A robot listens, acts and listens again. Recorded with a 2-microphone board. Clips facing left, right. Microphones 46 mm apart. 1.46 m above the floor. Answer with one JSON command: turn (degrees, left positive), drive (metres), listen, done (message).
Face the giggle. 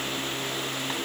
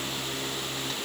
{"listen": true}
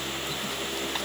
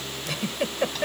{"turn": -90}
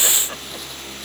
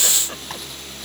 {"listen": true}
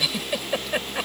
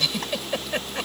{"turn": 10}
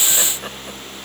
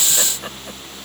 {"listen": true}
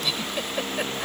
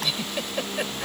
{"done": "Facing the giggle."}